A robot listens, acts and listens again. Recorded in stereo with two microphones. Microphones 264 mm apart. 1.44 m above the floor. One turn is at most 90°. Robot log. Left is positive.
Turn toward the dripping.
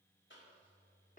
cmd idle
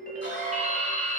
note: The dripping: about 30° right or 150° right.
cmd yaw -30
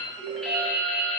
end: Found it: dripping, straight ahead, 1 to 2 m away.